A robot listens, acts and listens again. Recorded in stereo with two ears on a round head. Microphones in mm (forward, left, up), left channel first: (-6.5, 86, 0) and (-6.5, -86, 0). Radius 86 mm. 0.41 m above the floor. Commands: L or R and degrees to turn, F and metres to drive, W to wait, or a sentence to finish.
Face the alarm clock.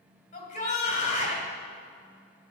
W
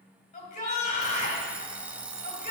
R30
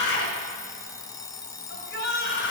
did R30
L20
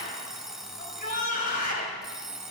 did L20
Found it: an alarm clock, straight ahead, under 1 m away.